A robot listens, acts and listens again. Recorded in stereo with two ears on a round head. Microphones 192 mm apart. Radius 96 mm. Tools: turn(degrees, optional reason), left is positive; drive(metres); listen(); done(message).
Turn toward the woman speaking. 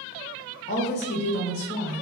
turn(degrees=50, reason="The woman speaking: about 50° left or 130° left.")
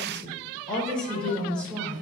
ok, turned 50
done("Facing the woman speaking.")